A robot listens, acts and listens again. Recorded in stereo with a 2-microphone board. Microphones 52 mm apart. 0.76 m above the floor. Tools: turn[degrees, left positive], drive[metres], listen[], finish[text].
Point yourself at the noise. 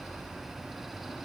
Action: listen[]
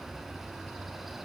Action: listen[]
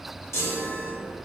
Thought: The chime: about 65° left or 115° left.
Action: turn[65]
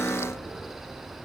Action: listen[]
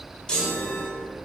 Thought: So it is at 15° left.
Action: turn[15]
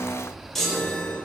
Action: finish[Found it: a chime, straight ahead, 1 to 2 m away.]